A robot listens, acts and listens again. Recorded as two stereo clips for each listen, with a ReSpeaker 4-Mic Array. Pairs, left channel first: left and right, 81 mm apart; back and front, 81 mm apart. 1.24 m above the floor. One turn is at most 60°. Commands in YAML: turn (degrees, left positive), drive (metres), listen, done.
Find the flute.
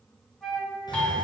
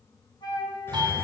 turn: 60
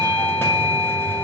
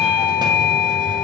turn: 60
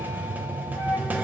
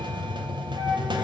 turn: 55
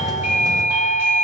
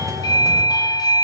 done: "I heard a flute from this way, but can't make it out now."